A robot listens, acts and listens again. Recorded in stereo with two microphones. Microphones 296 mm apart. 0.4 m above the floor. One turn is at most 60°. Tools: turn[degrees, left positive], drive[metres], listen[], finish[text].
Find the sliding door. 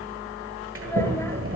Thought: The sliding door: about 45° right or 135° right.
Action: turn[-45]
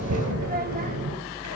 Thought: So it is at 85° right.
Action: turn[-60]
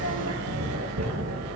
Thought: The sliding door is now 60° right.
Action: turn[-60]
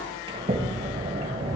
Thought: The sliding door is now 20° right.
Action: turn[-20]
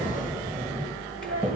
Action: finish[Facing the sliding door, 1 to 2 m away.]